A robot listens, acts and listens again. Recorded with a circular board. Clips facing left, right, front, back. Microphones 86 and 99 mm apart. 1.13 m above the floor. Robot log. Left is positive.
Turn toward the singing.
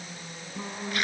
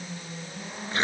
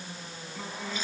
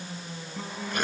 note: The singing: 95° left.
cmd yaw +95
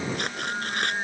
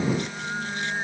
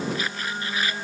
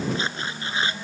end: Facing the singing.